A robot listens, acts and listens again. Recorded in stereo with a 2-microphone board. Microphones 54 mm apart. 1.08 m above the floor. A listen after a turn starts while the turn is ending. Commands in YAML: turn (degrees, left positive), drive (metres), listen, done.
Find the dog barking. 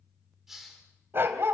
turn: -50
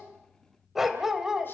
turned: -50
turn: -10
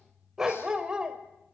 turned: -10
turn: -15
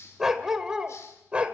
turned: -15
turn: -20
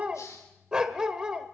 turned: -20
turn: -15
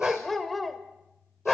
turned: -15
done: "Facing the dog barking."